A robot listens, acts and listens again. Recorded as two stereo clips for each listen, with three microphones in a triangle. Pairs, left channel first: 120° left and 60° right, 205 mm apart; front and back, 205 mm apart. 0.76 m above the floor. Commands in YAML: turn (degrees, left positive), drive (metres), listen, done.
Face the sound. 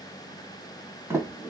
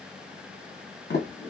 turn: 15
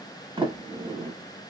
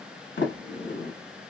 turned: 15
done: "Facing the sliding door, 1 to 2 m away."